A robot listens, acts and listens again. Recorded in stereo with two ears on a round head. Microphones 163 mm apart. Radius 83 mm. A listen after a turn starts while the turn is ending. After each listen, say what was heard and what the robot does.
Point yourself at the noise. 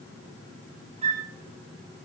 The flute: about 35° right or 145° right. Turn 35° right.
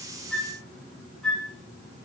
Facing the flute.